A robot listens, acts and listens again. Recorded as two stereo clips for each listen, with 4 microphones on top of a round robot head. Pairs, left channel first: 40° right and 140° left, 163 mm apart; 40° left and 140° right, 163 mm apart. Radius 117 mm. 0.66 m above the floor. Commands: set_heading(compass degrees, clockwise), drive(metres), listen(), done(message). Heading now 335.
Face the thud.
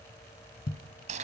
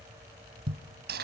set_heading(50)
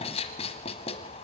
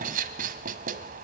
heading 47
done("I heard a thud from this way, but can't make it out now.")